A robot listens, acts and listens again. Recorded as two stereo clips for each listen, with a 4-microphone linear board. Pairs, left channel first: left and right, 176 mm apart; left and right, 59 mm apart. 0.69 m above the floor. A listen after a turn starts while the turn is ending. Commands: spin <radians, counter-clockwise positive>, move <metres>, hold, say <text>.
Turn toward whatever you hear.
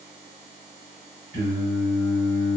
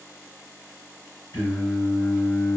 spin 1.57
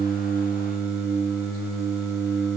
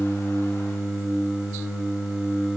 spin -0.17
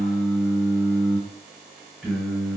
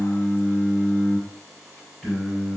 say Facing the singing, 1 to 2 m away.